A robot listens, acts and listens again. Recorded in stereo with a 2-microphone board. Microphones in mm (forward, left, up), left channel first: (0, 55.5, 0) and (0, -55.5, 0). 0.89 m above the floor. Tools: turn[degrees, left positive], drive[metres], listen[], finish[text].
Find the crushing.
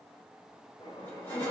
Thought: The crushing: about 20° left or 160° left.
Action: turn[20]
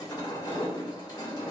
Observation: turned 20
Thought: So it is at 145° left.
Action: turn[145]
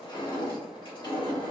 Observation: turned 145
Thought: The crushing is now 40° left.
Action: turn[40]
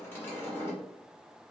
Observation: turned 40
Thought: The crushing is now 20° left.
Action: turn[20]
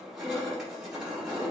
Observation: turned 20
Action: finish[Found it: crushing, straight ahead, 1 to 2 m away.]